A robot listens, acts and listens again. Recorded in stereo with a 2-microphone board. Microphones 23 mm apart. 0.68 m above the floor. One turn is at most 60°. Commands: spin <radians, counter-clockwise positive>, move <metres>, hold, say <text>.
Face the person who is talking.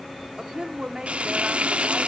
spin -0.79
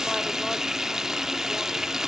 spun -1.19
hold
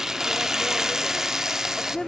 spin 0.26
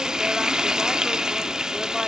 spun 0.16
hold
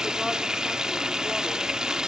hold
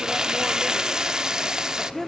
say Facing the woman speaking.